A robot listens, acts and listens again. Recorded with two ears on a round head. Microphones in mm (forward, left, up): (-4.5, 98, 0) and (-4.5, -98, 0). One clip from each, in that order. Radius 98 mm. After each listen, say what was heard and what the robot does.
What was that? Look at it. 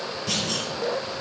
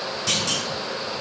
The clunk: about 55° right or 125° right. Turn 55° right.
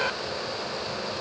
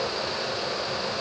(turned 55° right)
Keep listening.
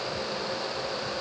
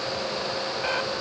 I heard a clunk, but can't make it out now. It was about straight ahead or 70° right.